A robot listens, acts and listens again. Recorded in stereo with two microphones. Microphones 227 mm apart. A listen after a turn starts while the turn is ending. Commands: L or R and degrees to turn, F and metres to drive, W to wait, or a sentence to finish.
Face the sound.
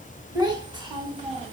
R25
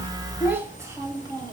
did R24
R20
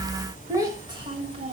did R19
R30
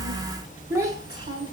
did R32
R25
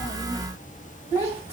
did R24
R30
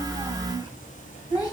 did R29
L15
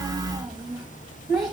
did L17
Found it: a child speaking, straight ahead.